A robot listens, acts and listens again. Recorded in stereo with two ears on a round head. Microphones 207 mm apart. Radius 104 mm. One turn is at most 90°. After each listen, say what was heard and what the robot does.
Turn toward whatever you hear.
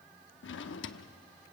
The drawer: about 55° left or 125° left. Turn 55° left.
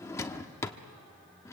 So it is at 15° left. Turn 15° left.
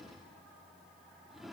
Facing the drawer.